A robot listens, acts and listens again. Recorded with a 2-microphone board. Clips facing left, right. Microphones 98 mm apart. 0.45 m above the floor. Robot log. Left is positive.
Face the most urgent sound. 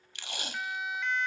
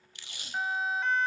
note: The siren: about 40° right or 140° right.
cmd yaw -40
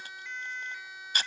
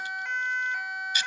note: So it is at 100° right.
cmd yaw -100
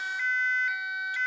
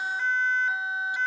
note: The siren is now 40° right.
cmd yaw -40
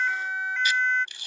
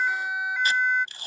note: The siren is now 10° right.
cmd yaw -10
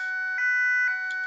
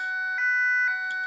end: Facing the siren.